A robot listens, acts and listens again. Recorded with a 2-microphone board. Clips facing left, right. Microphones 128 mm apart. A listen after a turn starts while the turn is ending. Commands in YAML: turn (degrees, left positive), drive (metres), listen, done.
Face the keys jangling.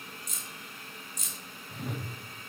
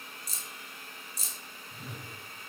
turn: -35
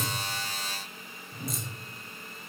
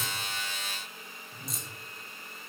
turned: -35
listen: true
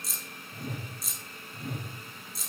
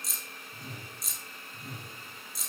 done: "Facing the keys jangling."